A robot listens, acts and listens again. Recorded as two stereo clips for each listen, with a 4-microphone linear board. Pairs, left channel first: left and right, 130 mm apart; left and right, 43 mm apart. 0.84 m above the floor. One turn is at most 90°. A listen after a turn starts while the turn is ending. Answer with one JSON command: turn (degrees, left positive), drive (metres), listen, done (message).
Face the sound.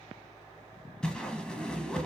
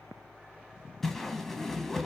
{"turn": 30}
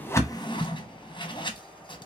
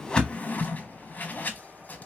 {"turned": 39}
{"turn": 90}
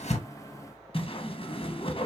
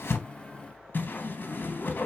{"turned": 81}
{"turn": 55}
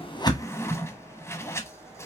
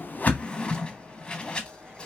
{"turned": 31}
{"turn": 25}
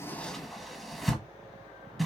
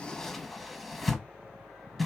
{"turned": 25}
{"done": "Found it: a whoosh, straight ahead."}